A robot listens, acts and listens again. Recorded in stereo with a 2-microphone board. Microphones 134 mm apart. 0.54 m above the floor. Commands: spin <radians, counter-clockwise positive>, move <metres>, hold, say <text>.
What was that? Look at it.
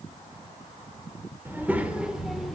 spin 0.52
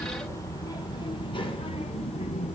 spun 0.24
spin 2.18
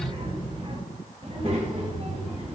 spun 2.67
spin -0.96
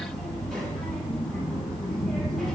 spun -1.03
say Found it: a child speaking, straight ahead.